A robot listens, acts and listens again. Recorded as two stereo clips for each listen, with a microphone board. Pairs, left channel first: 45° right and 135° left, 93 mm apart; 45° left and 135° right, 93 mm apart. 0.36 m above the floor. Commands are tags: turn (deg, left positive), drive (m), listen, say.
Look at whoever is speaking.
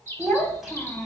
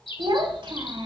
<turn deg="-140"/>
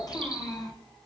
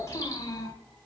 <say>Facing the child speaking, 1 to 2 m away.</say>